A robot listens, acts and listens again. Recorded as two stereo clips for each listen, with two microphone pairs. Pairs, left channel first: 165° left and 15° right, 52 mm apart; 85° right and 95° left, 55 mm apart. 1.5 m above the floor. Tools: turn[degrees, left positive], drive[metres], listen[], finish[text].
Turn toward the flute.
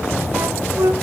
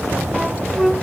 Action: finish[Facing the flute.]